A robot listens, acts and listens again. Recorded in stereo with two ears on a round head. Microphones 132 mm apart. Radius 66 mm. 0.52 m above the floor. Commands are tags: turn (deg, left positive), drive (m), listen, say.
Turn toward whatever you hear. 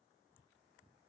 <listen/>
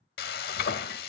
<turn deg="75"/>
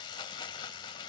<turn deg="30"/>
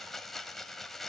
<say>Found it: frying, straight ahead.</say>